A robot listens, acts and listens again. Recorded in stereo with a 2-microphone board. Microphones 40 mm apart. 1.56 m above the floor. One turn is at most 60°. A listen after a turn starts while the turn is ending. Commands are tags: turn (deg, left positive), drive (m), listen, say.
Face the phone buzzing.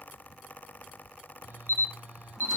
<turn deg="-60"/>
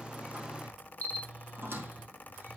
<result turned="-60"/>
<turn deg="-40"/>
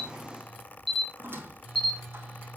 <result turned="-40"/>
<say>Found it: a phone buzzing, straight ahead, over 4 m away.</say>